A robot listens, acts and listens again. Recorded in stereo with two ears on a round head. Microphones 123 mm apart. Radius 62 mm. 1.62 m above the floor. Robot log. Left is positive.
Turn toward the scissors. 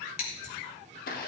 note: The scissors: about 60° left or 120° left.
cmd yaw +60
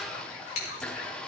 note: So it is at 55° left.
cmd yaw +55
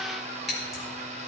end: Facing the scissors.